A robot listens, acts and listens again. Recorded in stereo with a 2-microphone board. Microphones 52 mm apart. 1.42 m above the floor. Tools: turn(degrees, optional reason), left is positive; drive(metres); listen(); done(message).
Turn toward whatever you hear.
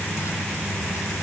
listen()
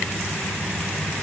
listen()
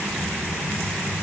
done("I can't make out anything to turn to.")